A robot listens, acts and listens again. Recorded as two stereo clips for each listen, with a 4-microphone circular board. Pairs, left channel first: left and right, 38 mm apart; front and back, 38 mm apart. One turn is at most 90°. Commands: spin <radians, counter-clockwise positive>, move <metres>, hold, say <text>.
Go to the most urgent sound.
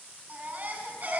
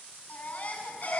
spin -0.79
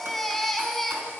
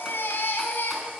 spin 0.17
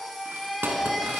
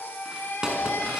move 1.0
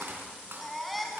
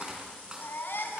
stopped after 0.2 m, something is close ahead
say Blocked. The baby crying is further on, straight ahead.